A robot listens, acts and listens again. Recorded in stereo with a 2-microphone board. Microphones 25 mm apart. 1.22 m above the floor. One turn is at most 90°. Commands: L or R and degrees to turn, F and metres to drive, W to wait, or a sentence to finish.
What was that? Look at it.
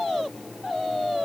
W
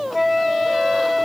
R30
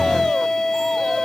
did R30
L25
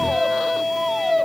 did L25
Facing the flute, 1 to 2 m away.